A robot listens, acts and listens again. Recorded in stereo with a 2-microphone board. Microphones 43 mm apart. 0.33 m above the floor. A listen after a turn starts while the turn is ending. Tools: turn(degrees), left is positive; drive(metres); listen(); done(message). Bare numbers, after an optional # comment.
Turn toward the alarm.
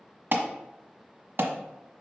# The alarm: about 60° right or 120° right.
turn(-60)
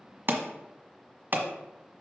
# So it is at 55° right.
turn(-55)
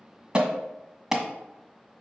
# The alarm is now 10° right.
turn(-10)
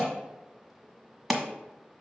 done("Facing the alarm.")